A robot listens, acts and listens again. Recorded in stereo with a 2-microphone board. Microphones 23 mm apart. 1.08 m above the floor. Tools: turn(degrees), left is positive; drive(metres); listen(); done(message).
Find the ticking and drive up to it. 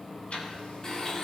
turn(degrees=65)
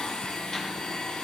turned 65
listen()
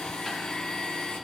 listen()
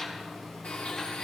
done("I heard ticking, but can't make it out now. It was about straight ahead or 50° left. I did not reach it.")